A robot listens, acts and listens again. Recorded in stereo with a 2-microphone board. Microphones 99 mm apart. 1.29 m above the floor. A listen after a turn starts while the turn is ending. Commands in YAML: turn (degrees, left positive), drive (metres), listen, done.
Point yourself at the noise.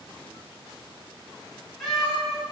turn: 30
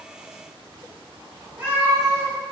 turn: -20
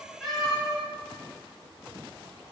done: "Found it: a cat meowing, straight ahead."